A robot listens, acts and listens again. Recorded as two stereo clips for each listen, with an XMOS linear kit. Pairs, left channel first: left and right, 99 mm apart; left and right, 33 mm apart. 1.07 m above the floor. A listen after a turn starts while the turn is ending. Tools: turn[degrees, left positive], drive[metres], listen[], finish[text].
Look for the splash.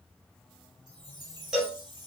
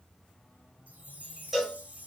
Action: listen[]
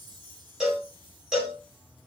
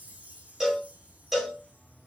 Action: listen[]
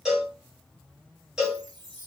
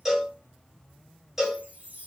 Action: finish[I can't make out a splash to turn to.]